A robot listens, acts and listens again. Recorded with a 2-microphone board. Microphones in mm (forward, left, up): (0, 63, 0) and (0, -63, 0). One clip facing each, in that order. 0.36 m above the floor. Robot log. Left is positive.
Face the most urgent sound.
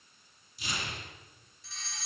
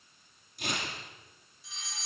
cmd yaw -30
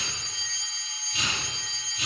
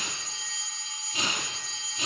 note: So it is at 140° right.
cmd yaw -140
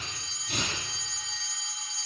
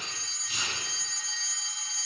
end: Facing the fire alarm, over 4 m away.